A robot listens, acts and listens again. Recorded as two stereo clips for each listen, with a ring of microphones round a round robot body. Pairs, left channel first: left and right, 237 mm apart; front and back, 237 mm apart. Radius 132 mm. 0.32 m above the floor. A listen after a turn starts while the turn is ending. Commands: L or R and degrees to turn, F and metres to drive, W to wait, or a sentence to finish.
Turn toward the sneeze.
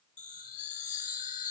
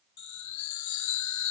W
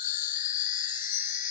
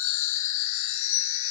W
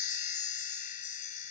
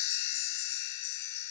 I can't make out a sneeze, only a chime.